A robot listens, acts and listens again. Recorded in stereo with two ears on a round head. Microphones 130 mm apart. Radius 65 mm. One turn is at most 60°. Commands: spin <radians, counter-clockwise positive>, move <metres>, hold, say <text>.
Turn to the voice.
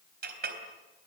hold
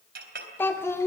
spin 0.35
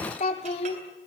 spin 1.05
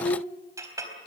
spin 1.05
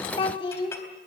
spin 0.61
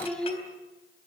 say Facing the child speaking, 2 to 4 m away.